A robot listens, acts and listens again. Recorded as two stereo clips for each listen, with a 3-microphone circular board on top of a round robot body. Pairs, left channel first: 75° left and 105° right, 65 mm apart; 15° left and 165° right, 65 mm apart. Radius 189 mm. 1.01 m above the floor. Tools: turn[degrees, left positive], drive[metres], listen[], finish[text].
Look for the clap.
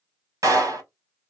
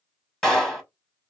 Thought: The clap: 70° right.
Action: turn[-70]
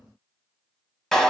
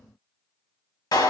Thought: The clap is now 10° right.
Action: turn[-10]
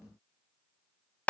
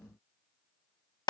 Action: finish[Found it: a clap, straight ahead.]